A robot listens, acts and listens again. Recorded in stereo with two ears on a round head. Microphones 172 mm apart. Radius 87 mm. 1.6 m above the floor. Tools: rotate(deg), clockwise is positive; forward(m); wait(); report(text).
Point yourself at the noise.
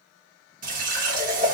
rotate(45)
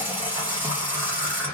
rotate(15)
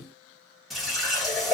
report("Facing the running tap.")